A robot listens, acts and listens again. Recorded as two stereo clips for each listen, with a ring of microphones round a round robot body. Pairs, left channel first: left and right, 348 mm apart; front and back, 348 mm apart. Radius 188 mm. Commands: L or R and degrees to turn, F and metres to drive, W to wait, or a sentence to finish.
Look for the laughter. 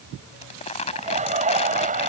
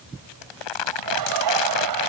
R155
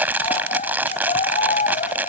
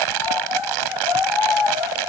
L20
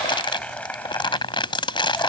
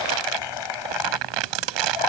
Facing the laughter.